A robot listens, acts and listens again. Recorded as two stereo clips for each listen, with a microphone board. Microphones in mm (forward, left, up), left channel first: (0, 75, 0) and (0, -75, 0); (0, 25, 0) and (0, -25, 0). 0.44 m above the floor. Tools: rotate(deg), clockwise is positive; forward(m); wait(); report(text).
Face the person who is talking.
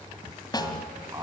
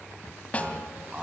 rotate(25)
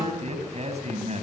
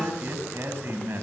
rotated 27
rotate(130)
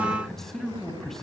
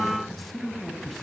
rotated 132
report("Found it: a man speaking, straight ahead.")